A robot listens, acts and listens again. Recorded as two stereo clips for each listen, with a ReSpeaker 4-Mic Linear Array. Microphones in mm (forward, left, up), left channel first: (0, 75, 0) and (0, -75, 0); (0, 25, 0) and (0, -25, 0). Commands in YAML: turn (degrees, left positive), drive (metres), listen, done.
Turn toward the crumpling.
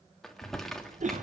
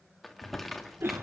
turn: 30
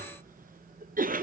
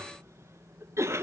listen: true
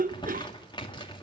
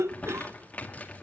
turn: 150
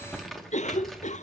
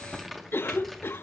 done: "Found it: crumpling, straight ahead, 2 to 4 m away."